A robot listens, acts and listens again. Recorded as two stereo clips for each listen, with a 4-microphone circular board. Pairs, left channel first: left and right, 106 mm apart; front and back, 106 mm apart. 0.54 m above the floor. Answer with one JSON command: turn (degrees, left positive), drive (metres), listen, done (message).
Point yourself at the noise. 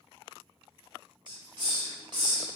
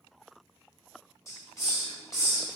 {"turn": -55}
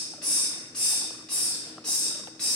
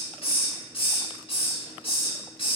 {"turn": 10}
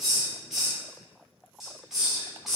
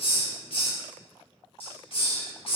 {"done": "Facing the hiss."}